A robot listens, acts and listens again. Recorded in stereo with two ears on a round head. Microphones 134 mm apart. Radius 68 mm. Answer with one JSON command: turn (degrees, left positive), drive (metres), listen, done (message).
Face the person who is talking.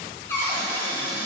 {"listen": true}
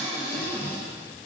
{"listen": true}
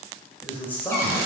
{"turn": 30}
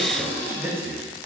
{"turn": -20}
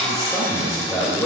{"done": "Found it: a man speaking, straight ahead, 1 to 2 m away."}